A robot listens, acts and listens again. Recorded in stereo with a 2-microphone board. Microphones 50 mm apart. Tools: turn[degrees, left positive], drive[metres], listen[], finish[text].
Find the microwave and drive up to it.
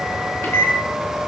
Thought: The microwave: about 65° left or 115° left.
Action: turn[65]
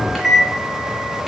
Action: drive[1.0]
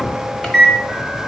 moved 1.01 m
Thought: The microwave is now 20° left.
Action: turn[20]
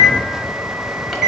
Action: drive[1.0]
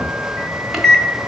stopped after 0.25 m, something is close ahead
Action: finish[I am next to the microwave.]